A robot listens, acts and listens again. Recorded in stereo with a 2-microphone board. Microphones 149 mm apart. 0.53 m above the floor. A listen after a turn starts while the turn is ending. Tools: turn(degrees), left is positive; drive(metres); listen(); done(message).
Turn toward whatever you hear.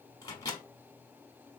turn(degrees=20)
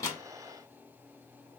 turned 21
listen()
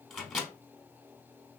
done("Found it: a microwave, straight ahead.")